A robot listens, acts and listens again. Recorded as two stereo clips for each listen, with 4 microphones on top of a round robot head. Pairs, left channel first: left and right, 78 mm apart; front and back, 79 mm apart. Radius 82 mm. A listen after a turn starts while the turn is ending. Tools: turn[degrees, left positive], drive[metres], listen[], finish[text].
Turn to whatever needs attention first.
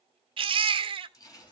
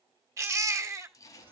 Thought: The baby crying: 115° right.
Action: turn[-115]
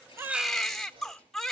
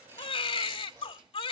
Action: finish[Facing the baby crying.]